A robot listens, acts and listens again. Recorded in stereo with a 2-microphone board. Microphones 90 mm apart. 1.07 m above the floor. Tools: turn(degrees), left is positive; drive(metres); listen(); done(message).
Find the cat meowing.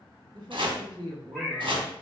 turn(degrees=30)
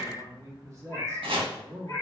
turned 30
turn(degrees=140)
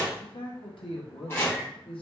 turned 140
listen()
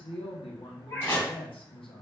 turn(degrees=35)
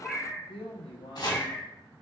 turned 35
turn(degrees=10)
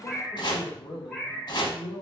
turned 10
done("Found it: a cat meowing, straight ahead.")